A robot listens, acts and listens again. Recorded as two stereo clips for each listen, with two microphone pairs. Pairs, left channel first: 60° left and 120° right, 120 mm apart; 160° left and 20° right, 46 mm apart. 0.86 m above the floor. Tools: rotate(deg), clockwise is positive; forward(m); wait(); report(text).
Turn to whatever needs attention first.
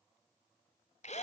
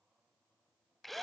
wait()
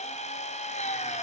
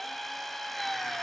wait()
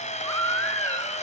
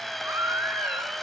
report("Facing the baby crying.")